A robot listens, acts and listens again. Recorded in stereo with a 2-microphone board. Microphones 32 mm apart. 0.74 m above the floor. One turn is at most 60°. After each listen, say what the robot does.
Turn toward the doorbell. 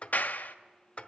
Keep listening.
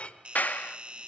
Turn 35° right.
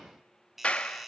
Facing the doorbell.